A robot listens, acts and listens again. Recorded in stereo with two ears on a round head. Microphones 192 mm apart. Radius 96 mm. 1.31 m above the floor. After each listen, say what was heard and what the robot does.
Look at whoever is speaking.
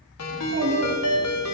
The child speaking: about 70° right or 110° right. Turn 70° right.
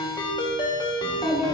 Facing the child speaking.